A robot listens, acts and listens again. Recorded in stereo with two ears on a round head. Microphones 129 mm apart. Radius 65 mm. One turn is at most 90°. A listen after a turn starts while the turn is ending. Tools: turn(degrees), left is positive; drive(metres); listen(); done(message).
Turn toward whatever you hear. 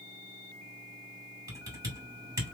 turn(degrees=-25)
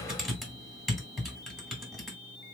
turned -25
done("Facing the typing on a keyboard.")